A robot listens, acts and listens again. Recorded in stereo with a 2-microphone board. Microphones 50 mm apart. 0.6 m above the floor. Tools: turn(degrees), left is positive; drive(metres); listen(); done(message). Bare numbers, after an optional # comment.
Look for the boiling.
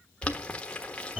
# The boiling: about 25° left or 155° left.
turn(25)
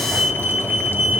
listen()
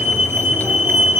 listen()
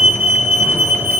done("I heard boiling, but can't make it out now. It was about straight ahead or 130° left.")